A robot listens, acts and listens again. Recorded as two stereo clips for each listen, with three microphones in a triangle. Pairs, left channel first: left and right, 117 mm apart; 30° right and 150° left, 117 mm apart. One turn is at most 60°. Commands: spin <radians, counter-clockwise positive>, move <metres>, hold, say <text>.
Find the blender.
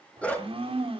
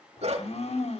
spin -0.87
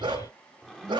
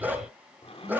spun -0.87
say Facing the blender, 2 to 4 m away.